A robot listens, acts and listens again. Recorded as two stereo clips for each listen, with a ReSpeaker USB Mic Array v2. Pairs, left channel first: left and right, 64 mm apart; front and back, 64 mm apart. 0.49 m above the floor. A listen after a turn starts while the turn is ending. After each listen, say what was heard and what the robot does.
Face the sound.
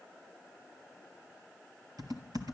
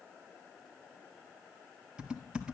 The typing on a keyboard: 105° right. Turn 105° right.
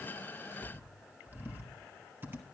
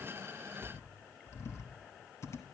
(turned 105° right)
The typing on a keyboard is now 35° right. Turn 35° right.
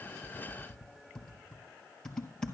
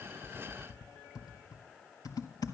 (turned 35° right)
The typing on a keyboard is now 10° left. Turn 10° left.
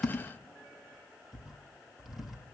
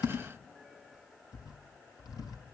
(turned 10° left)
Found it: typing on a keyboard, straight ahead, 1 to 2 m away.